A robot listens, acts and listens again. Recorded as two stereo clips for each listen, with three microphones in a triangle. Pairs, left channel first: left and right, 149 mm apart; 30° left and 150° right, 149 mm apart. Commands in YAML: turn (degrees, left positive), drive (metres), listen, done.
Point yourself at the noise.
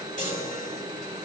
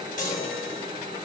turn: 60
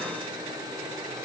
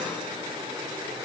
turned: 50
turn: 10
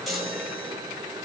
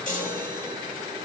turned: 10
done: "Facing the chime."